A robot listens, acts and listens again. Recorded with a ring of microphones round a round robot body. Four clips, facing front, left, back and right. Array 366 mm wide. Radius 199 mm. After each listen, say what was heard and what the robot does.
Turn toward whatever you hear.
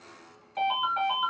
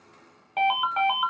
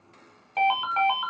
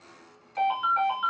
The ringtone: 130° left. Turn 130° left.
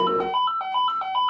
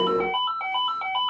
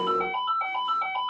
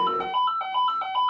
The ringtone is now 20° left. Turn 20° left.
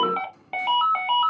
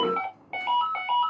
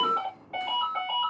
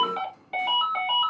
The ringtone is now 10° left. Turn 10° left.
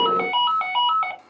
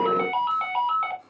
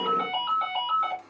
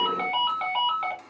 Found it: a ringtone, straight ahead.